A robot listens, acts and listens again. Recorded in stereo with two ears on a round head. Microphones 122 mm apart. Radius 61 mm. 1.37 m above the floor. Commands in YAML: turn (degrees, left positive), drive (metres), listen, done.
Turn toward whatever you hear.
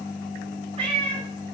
turn: -35
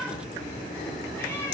turn: 15
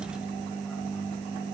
listen: true
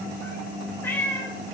turn: 20
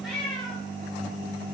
turn: 10
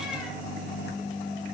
listen: true
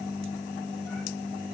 listen: true
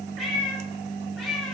done: "Facing the cat meowing."